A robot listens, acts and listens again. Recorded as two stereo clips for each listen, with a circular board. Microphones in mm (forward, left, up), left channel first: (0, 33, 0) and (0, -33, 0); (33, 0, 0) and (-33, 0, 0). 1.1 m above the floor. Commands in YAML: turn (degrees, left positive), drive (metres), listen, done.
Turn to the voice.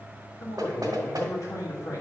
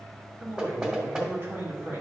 turn: 125
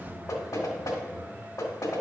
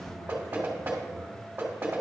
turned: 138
turn: -15
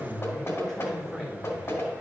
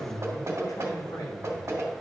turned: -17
done: "Found it: a man speaking, straight ahead."